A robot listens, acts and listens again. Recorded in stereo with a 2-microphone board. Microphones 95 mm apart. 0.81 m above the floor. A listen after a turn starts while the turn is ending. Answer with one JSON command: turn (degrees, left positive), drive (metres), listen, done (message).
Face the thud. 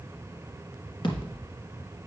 {"turn": 55}
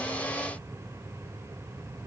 {"listen": true}
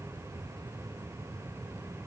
{"done": "I heard a thud, but can't make it out now. It was about straight ahead or 70° left."}